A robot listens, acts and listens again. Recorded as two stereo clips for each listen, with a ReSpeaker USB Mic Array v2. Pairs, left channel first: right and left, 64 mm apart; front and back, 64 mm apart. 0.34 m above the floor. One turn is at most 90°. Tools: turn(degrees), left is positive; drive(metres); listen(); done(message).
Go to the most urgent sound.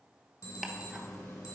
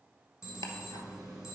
turn(degrees=-90)
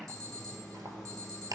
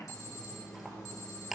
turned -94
turn(degrees=-10)
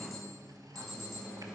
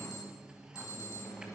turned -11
drive(metres=1.0)
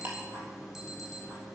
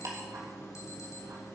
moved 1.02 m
drive(metres=1.0)
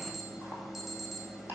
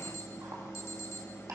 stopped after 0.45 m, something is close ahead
done("Arrived at the alarm, straight ahead.")